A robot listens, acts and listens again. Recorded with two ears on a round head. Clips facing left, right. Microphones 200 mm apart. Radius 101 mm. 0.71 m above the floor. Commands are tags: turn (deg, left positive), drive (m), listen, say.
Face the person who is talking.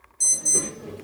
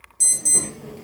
<turn deg="25"/>
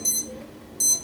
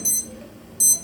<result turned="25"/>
<turn deg="115"/>
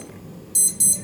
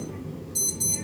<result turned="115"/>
<turn deg="-45"/>
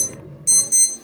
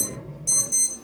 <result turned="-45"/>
<say>Facing the child speaking, 1 to 2 m away.</say>